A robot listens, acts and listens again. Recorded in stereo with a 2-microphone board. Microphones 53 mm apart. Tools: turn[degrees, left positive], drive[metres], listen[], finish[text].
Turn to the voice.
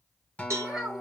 Action: turn[-30]
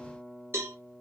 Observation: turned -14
Action: listen[]
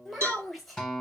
Action: finish[Found it: a child speaking, straight ahead.]